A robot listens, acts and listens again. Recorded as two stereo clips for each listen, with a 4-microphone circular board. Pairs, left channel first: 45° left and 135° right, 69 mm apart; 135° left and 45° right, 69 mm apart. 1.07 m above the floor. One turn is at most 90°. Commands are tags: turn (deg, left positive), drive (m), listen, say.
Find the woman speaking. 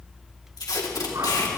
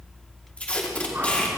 <listen/>
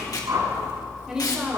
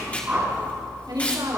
<turn deg="-55"/>
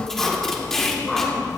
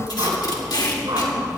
<listen/>
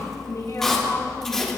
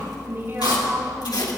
<turn deg="10"/>
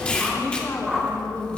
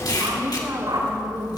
<say>Found it: a woman speaking, straight ahead.</say>